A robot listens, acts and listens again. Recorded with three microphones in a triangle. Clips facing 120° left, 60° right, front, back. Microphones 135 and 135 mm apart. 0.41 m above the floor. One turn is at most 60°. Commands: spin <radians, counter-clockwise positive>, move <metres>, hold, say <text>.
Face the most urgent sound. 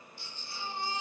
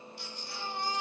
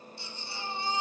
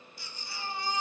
spin -1.05
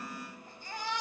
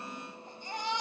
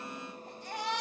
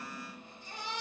spin 0.17
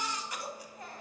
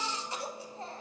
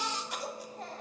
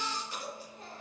say Found it: a baby crying, straight ahead, 1 to 2 m away.